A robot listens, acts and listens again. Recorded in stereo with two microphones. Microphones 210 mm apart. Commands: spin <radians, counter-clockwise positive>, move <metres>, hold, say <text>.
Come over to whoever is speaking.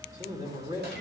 spin -0.52
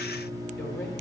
hold
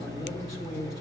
move 1.0
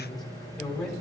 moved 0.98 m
move 1.0
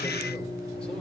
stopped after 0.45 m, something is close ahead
hold
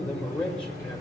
say I am next to the man speaking.